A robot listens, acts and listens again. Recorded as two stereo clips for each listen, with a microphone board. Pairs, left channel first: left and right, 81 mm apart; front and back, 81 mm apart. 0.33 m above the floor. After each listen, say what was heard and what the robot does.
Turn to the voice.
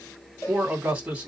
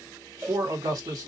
The man speaking: 155° right. Turn 155° right.
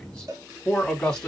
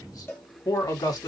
The man speaking is now 15° left. Turn 15° left.
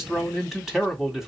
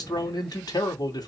Found it: a man speaking, straight ahead.